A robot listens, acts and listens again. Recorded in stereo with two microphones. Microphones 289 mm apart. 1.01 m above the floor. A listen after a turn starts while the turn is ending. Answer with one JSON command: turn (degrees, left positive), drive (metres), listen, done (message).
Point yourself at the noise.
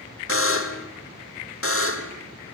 {"turn": 50}
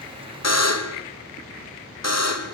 {"turn": 75}
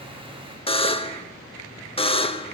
{"turn": 20}
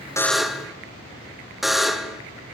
{"done": "Facing the buzzer."}